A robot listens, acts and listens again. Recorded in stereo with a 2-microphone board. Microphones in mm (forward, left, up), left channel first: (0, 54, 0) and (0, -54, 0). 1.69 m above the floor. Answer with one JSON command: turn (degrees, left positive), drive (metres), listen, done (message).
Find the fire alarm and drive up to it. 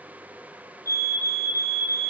{"turn": -30}
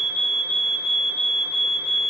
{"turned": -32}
{"turn": -115}
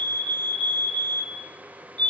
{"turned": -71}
{"turn": -45}
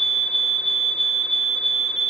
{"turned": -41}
{"drive": 1.0}
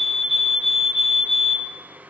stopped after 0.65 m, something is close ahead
{"done": "Blocked. The fire alarm is further on, straight ahead."}